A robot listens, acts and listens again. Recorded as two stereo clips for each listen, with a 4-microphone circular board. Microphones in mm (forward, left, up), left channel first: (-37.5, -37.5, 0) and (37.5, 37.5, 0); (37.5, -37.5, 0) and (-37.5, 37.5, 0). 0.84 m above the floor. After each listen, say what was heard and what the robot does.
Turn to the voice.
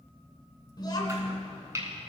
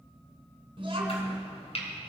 The child speaking: 175° left. Turn 175° left.
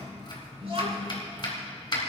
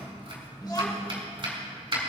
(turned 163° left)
The child speaking is now 10° left. Turn 10° left.
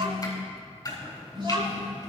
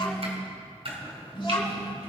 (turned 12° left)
Facing the child speaking, 2 to 4 m away.